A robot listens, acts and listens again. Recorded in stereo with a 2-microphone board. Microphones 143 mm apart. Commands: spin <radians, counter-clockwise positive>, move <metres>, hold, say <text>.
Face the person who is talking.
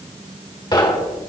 hold
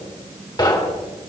hold
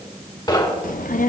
spin 1.31
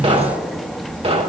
say Facing the child speaking, 1 to 2 m away.